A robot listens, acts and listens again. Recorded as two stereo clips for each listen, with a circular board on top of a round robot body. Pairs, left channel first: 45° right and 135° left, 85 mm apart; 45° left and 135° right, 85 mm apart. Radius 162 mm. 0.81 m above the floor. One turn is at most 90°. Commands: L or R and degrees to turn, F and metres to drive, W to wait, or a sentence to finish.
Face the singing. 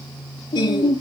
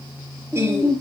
R75
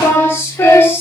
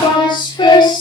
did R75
L20
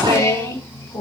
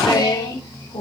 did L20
L10
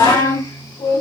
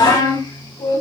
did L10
Facing the singing, 2 to 4 m away.